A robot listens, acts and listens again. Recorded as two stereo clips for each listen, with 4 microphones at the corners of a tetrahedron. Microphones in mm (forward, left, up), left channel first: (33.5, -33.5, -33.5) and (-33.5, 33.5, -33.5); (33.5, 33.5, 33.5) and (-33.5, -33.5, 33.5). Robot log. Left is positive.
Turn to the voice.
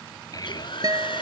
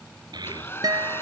note: The child speaking: 95° right.
cmd yaw -95
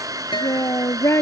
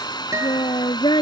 note: The child speaking is now 10° left.
cmd yaw +10
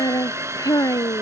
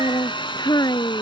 end: Facing the child speaking.